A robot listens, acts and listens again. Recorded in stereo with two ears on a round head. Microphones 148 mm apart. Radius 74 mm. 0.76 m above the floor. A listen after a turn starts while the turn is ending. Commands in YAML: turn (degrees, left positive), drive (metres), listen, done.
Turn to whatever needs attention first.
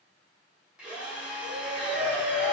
turn: -40
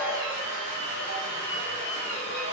listen: true
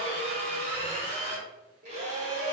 turn: -95
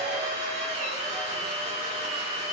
listen: true
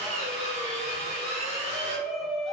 done: "Facing the shout, under 1 m away."